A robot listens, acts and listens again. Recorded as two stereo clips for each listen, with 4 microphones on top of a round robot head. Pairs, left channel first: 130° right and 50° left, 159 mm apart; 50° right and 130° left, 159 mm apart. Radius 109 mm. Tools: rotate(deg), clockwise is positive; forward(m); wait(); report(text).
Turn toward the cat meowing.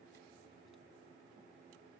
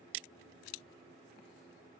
wait()
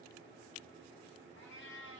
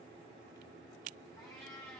rotate(130)
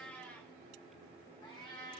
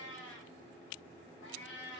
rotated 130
rotate(75)
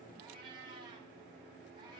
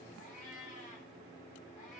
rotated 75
rotate(10)
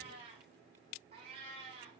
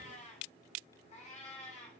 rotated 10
report("Found it: a cat meowing, straight ahead.")